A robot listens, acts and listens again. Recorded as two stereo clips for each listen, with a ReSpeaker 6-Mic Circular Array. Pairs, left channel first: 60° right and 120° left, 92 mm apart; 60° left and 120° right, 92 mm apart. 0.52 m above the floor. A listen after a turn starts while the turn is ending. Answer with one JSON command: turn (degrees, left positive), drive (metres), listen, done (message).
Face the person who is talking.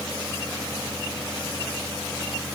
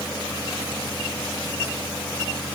{"listen": true}
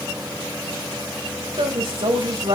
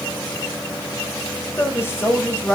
{"turn": 120}
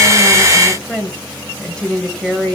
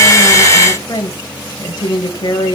{"turn": 20}
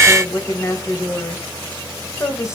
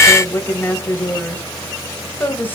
{"done": "Facing the woman speaking."}